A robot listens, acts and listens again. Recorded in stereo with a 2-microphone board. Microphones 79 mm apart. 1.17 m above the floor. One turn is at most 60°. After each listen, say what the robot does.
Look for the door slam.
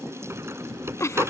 Turn 30° right.
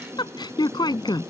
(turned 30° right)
Keep listening.
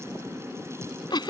I heard a door slam, but can't make it out now. It was about straight ahead or 120° right.